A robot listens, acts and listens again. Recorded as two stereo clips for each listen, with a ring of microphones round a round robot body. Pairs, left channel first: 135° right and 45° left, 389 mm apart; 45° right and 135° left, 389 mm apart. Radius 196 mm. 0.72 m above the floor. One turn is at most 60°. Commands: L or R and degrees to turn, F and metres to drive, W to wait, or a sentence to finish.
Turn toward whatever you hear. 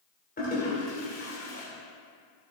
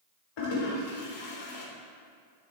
R60
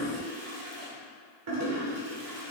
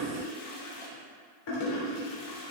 Facing the toilet flushing, 2 to 4 m away.